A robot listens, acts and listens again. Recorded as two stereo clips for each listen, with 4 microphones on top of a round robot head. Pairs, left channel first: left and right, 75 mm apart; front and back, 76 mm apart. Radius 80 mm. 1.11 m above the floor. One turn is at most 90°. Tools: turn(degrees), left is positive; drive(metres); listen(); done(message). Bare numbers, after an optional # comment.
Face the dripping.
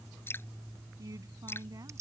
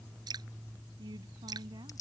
# The dripping: 150° left.
turn(90)
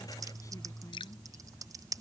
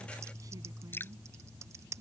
# The dripping is now 60° left.
turn(60)
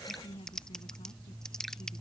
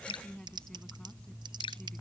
done("Found it: dripping, straight ahead.")